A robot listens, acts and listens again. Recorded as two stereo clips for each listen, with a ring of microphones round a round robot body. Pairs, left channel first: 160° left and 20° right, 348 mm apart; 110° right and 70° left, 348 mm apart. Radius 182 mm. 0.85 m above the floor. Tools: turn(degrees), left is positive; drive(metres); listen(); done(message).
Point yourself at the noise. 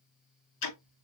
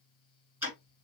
turn(degrees=150)
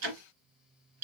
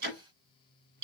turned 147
done("Facing the ticking.")